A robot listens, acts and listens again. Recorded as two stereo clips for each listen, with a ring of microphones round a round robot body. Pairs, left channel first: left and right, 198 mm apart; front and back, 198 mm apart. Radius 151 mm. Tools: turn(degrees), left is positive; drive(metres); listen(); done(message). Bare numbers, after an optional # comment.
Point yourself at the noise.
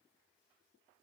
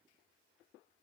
listen()
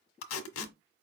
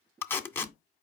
# The tape being pulled: 80° left.
turn(80)
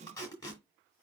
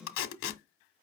# The tape being pulled is now 15° left.
turn(15)
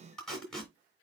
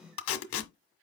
done("Found it: tape being pulled, straight ahead.")